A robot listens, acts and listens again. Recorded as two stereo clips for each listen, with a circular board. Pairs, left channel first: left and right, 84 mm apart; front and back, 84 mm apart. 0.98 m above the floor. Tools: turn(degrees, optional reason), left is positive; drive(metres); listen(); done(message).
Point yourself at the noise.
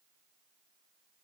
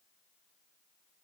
listen()
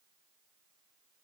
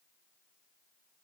listen()
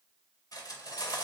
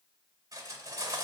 turn(degrees=130, reason="The cutlery clinking: 130° left.")
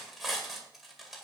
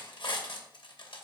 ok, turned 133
done("Facing the cutlery clinking, 2 to 4 m away.")